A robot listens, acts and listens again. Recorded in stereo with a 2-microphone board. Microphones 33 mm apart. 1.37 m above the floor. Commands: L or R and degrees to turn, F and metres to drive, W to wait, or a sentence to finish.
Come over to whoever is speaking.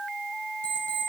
W
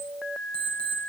W
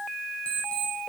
I can't make out anyone speaking, only an alarm clock.